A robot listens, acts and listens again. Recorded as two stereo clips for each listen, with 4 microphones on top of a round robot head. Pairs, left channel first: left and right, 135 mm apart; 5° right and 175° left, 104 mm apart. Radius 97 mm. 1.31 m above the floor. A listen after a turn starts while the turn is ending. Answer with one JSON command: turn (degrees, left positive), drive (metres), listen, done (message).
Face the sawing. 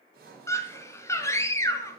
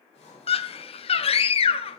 {"turn": -55}
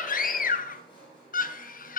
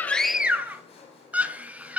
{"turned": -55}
{"turn": 25}
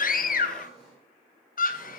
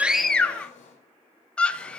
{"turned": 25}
{"done": "Facing the sawing."}